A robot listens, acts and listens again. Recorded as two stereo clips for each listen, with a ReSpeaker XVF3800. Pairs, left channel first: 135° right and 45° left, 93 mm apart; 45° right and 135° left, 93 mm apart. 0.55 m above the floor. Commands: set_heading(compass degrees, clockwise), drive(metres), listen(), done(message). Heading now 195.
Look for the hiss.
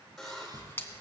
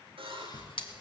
set_heading(265)
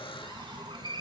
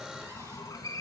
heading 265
set_heading(255)
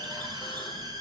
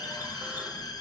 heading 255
done("Found it: a hiss, straight ahead, 2 to 4 m away.")